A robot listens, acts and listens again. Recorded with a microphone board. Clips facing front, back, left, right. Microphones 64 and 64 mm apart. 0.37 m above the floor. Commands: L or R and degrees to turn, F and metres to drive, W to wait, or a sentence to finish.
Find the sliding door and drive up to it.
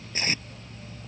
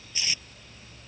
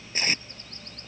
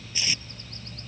W
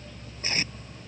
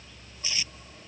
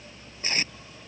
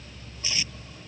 W
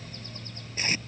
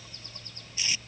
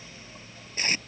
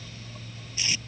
I can't make out a sliding door to turn to.